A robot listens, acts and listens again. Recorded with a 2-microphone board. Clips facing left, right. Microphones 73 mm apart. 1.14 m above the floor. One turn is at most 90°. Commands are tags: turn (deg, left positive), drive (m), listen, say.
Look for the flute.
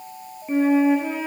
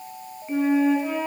<turn deg="90"/>
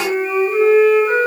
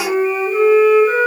<say>Found it: a flute, straight ahead.</say>